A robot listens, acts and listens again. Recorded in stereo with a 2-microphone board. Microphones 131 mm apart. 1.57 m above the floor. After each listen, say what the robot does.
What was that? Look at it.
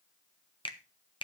Turn 40° left.
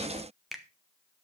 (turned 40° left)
Found it: a finger snap, straight ahead.